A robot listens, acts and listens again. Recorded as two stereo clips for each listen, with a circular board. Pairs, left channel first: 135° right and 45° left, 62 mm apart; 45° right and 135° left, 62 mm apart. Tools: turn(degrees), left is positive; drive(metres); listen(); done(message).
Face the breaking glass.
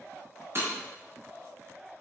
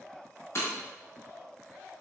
done("Facing the breaking glass, over 4 m away.")